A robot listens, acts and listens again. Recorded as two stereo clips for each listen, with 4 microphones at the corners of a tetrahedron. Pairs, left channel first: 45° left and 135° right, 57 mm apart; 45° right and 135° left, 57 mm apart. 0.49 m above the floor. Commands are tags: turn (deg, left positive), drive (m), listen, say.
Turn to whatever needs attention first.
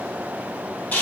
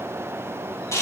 <listen/>
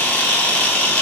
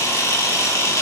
<listen/>
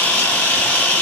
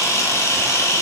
<say>I can't make out anything urgent to turn to.</say>